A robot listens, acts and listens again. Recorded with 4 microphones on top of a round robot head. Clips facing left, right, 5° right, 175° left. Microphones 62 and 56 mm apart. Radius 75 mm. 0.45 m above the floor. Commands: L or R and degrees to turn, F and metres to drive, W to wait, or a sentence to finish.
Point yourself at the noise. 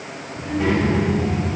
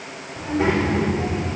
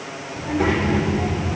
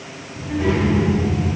R20
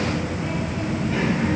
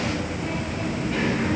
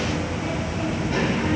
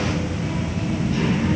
L10
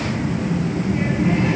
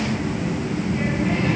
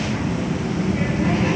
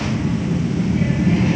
L15
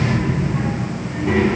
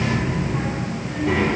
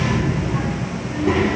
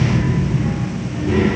L10
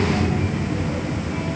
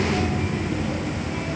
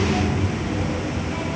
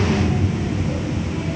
Facing the child speaking, over 4 m away.